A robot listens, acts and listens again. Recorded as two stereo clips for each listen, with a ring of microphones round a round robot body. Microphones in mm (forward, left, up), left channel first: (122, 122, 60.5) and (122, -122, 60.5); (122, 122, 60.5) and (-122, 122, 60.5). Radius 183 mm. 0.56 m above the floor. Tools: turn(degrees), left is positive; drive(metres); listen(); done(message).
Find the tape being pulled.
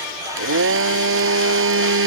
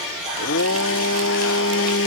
listen()
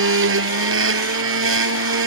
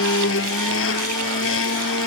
listen()
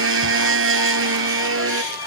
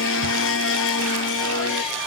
done("I can't make out tape being pulled to turn to.")